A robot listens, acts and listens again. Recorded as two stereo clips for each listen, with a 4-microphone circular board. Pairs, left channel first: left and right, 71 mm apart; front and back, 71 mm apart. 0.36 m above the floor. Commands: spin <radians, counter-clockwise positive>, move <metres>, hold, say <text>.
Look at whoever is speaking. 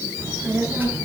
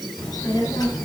spin -0.44
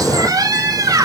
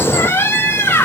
hold
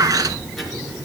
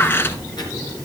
say Found it: a child speaking, straight ahead.